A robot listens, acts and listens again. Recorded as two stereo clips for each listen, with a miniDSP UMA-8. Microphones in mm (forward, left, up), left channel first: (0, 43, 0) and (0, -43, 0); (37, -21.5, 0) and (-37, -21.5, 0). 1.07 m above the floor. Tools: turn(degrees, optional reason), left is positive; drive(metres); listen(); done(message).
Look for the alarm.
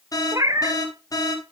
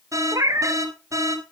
turn(degrees=135, reason="The alarm: 135° left.")
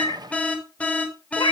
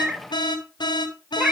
turn(degrees=15, reason="The alarm is now 15° left.")
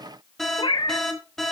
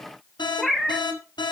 done("Found it: an alarm, straight ahead.")